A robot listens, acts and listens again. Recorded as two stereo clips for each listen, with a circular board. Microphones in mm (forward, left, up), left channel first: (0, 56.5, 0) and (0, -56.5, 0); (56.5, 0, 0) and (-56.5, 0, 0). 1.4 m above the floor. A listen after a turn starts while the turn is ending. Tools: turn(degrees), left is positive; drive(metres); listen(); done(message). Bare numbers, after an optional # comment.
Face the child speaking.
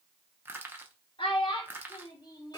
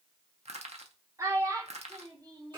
# The child speaking: 125° left.
turn(125)
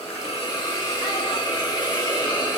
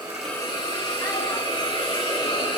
listen()
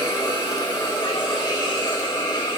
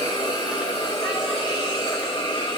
listen()
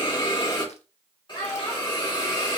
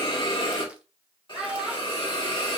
# The child speaking is now 100° left.
turn(100)
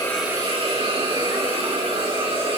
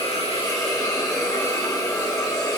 listen()
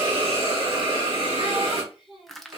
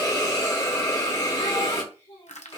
done("Facing the child speaking, 2 to 4 m away.")